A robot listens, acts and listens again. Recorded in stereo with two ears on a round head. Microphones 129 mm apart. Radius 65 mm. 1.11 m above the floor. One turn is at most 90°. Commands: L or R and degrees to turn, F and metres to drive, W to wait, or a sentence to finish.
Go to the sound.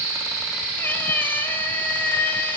L30
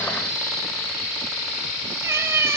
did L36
R20
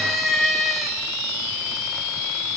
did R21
F1.0
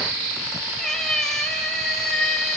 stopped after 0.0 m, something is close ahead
Something is in my way. I am facing the cat meowing but have not reached it.